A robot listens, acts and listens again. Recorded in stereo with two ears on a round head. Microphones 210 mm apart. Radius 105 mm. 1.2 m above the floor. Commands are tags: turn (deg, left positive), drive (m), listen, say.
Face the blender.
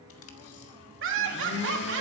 <turn deg="50"/>
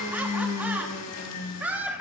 <turn deg="75"/>
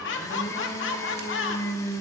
<turn deg="15"/>
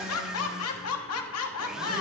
<say>Facing the blender.</say>